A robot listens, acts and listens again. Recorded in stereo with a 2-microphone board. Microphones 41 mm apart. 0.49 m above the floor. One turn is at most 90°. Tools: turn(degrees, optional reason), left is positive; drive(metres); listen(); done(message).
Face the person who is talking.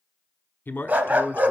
turn(degrees=55, reason="The man speaking: about 55° left or 125° left.")
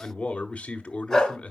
turn(degrees=40, reason="So it is at 40° left.")
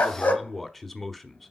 done("Facing the man speaking, 1 to 2 m away.")